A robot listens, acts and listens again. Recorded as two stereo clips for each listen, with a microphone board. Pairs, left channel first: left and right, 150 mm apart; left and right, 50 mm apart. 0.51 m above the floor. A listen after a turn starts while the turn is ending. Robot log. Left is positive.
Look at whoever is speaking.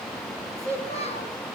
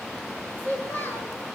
note: The child speaking: about 40° left or 140° left.
cmd yaw +40
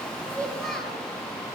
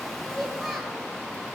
cmd idle
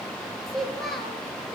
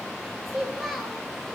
end: Facing the child speaking, over 4 m away.